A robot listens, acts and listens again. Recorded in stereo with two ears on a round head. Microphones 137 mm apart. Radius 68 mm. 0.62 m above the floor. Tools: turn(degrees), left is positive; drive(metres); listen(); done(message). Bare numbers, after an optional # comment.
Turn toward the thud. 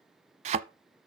# The thud: about 45° right or 135° right.
turn(-45)
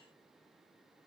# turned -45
listen()
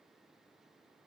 done("I heard a thud, but can't make it out now. It was about straight ahead or 90° right.")